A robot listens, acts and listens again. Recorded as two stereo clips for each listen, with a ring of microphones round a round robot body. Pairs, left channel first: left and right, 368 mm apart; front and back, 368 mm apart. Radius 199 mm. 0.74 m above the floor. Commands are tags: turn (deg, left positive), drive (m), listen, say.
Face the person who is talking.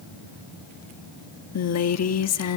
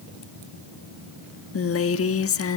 <turn deg="50"/>
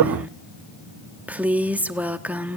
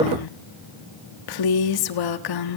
<say>Found it: a woman speaking, straight ahead.</say>